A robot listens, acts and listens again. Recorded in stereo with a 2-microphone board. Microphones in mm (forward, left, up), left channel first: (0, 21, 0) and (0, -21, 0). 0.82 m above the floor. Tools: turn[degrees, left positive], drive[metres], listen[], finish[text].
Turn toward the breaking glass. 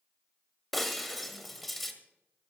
Action: turn[30]
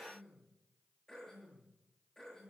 Action: listen[]
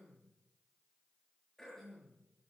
Action: finish[I heard breaking glass, but can't make it out now. It was about 25° right or 145° left.]